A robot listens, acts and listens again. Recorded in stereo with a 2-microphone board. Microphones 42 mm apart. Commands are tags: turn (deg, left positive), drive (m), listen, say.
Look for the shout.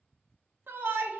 <turn deg="-55"/>
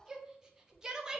<turn deg="-15"/>
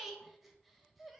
<say>Found it: a shout, straight ahead.</say>